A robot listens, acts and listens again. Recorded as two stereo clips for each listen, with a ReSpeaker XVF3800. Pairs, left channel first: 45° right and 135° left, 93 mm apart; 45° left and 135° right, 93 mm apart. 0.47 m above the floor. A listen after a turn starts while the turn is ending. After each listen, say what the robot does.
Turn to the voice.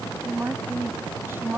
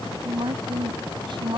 Turn 160° right.
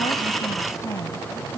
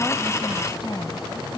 Turn 10° left.
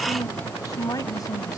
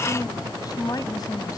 Found it: a woman speaking, straight ahead.